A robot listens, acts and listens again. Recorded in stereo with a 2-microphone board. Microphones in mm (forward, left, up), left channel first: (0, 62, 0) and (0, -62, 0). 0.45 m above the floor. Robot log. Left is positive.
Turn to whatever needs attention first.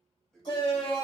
note: The shout: about 40° left or 140° left.
cmd yaw +40
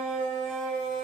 end: Found it: a shout, straight ahead.